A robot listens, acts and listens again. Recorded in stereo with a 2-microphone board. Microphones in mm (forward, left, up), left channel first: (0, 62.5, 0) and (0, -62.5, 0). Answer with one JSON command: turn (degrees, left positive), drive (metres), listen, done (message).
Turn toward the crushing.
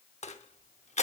{"turn": 65}
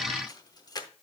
{"turn": 35}
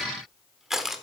{"done": "Facing the crushing, under 1 m away."}